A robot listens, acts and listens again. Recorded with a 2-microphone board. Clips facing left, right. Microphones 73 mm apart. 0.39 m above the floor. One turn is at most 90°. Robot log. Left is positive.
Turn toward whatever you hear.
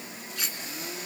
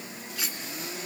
cmd yaw +30
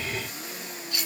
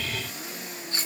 note: So it is at 35° right.
cmd yaw -35
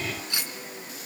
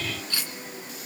note: The cutlery clinking is now 20° left.
cmd yaw +20
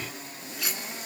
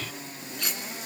end: Found it: cutlery clinking, straight ahead.